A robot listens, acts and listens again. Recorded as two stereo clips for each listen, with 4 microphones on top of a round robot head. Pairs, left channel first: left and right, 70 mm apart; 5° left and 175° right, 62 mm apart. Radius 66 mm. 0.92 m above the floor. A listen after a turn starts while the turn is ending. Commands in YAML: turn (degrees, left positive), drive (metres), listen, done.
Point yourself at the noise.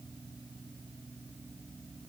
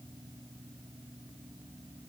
listen: true
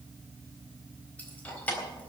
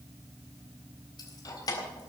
turn: 20
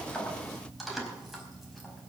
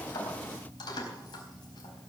done: "Facing the keys jangling."